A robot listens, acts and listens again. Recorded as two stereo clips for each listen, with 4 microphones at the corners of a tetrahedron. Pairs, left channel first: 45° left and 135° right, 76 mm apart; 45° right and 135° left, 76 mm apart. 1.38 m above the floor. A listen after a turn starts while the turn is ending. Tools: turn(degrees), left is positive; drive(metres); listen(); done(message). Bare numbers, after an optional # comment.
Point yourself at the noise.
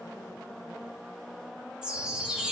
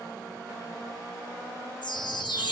# The chime: 55° right.
turn(-55)
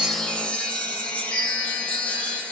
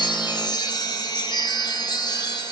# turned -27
# The chime is now 30° right.
turn(-30)
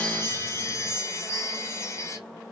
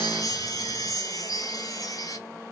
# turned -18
# The chime is now 10° right.
turn(-10)
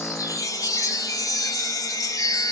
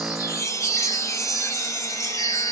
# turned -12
done("Facing the chime, 1 to 2 m away.")